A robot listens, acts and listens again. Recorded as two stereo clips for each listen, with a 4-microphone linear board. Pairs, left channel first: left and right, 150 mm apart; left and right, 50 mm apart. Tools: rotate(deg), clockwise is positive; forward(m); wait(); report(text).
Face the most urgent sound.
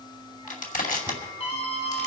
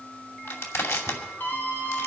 rotate(-40)
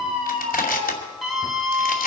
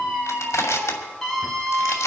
report("Facing the scream, over 4 m away.")